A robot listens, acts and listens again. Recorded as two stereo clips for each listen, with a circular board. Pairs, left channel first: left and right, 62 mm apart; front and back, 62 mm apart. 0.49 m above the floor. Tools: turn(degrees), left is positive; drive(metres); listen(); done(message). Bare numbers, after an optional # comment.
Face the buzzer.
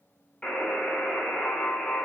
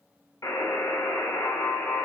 # The buzzer: 10° left.
turn(10)
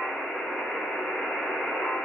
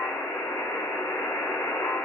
done("Facing the buzzer.")